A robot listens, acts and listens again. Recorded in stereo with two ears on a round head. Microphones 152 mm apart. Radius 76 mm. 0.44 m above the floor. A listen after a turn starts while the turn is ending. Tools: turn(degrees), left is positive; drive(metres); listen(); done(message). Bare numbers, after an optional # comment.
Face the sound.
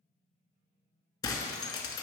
# The breaking glass: about 25° left or 155° left.
turn(25)
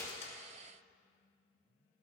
listen()
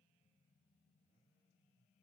done("I heard breaking glass, but can't make it out now. It was about straight ahead or 130° left.")